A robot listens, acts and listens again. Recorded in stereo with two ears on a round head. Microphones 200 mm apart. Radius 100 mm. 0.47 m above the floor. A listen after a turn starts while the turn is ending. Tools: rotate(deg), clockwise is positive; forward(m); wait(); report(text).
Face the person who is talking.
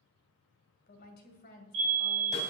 rotate(-45)
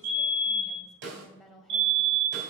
report("Facing the woman speaking, 2 to 4 m away.")